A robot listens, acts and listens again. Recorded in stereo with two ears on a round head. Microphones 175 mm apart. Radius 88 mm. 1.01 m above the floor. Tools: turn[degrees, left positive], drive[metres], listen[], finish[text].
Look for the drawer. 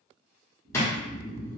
Action: turn[30]
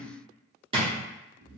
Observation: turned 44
Thought: So it is at 30° right.
Action: turn[-30]
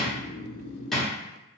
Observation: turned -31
Action: finish[Facing the drawer, under 1 m away.]